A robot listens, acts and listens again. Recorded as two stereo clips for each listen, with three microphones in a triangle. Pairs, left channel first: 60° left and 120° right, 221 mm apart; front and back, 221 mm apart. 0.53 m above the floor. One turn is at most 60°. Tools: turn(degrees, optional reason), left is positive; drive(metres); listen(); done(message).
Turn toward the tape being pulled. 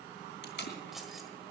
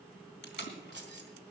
turn(degrees=30, reason="The tape being pulled: 30° left.")
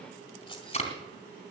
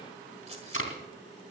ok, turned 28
done("Found it: tape being pulled, straight ahead.")